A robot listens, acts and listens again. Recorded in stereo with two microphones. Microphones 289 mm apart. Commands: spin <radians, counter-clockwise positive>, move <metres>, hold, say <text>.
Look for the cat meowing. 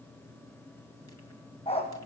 hold
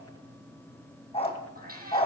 spin -0.52
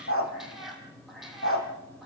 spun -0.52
say Facing the cat meowing, over 4 m away.